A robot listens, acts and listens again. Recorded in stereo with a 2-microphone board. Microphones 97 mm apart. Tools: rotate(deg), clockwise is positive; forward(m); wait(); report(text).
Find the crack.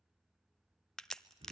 rotate(-30)
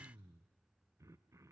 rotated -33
wait()
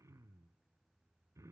report("I heard a crack, but can't make it out now. It was about 30° right or 145° left.")